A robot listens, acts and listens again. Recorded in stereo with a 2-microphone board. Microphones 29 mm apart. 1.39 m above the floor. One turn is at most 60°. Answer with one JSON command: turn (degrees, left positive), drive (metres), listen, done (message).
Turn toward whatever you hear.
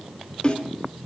{"turn": 35}
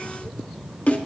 {"turn": 60}
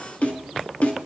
{"turn": 60}
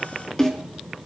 {"turn": 25}
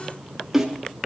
{"turn": -10}
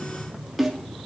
{"done": "Facing the snare drum."}